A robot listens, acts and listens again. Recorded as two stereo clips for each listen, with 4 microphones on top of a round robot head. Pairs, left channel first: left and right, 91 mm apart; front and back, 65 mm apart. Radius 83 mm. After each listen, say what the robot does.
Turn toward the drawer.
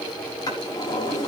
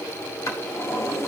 Turn 35° left.
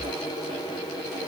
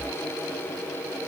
Keep listening.
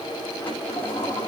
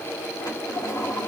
Turn 20° left.
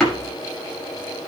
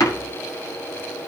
Found it: a drawer, straight ahead.